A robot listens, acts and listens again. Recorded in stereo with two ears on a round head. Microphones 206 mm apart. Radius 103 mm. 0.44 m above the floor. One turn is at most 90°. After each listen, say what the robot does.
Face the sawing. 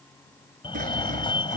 Turn 35° right.
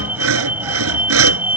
Turn 90° right.
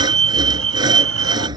Turn 20° right.
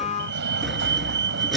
Found it: sawing, straight ahead.